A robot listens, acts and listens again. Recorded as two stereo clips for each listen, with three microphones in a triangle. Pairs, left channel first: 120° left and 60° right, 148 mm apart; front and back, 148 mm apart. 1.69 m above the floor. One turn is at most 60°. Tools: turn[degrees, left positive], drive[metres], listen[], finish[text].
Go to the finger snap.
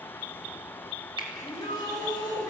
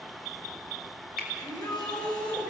Action: drive[1.0]
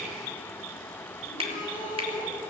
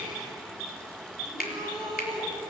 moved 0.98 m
Thought: The finger snap is now 10° right.
Action: turn[-10]
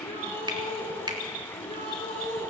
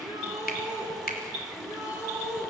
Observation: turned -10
Action: drive[1.0]
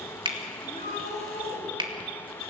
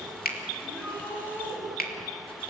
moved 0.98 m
Action: drive[1.0]
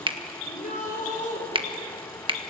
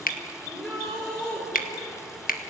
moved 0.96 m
Action: drive[1.0]
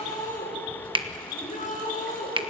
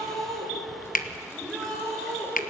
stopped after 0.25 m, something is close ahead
Action: finish[Arrived at the finger snap, straight ahead.]